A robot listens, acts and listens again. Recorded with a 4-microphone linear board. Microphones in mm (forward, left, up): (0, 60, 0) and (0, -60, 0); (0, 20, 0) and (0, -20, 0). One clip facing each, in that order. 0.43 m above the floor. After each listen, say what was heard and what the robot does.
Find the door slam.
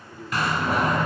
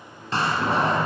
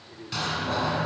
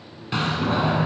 The door slam: about 30° right or 150° right. Turn 30° right.
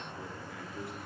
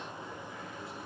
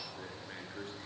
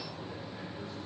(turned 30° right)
Keep listening.
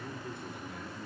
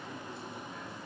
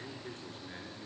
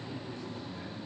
I heard a door slam, but can't make it out now. It was about straight ahead or 120° right.